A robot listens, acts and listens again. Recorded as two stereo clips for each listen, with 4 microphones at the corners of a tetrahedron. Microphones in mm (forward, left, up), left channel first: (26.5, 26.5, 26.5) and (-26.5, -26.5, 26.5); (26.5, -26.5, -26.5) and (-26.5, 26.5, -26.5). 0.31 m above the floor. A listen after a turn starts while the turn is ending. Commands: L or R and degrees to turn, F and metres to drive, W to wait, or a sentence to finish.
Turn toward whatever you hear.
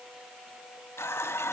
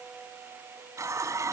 L95
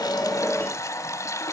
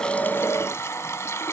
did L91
Facing the running tap, 1 to 2 m away.